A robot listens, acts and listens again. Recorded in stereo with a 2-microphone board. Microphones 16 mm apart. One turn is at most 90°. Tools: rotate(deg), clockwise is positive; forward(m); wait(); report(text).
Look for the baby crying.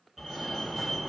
wait()
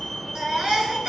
rotate(65)
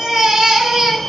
rotate(50)
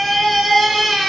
rotate(-10)
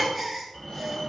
report("Found it: a baby crying, straight ahead, 2 to 4 m away.")